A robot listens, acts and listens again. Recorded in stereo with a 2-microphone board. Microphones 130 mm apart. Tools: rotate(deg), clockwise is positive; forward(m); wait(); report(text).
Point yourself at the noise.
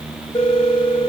rotate(-20)
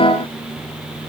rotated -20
wait()
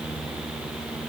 wait()
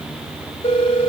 rotate(-135)
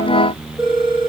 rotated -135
report("Found it: a phone ringing, straight ahead.")